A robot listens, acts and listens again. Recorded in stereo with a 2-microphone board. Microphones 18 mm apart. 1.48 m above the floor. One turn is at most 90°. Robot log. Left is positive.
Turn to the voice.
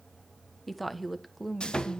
cmd yaw +30
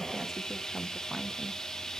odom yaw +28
cmd idle
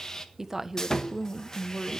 note: So it is at 20° right.
cmd yaw -20
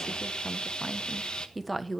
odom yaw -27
end: Facing the woman speaking.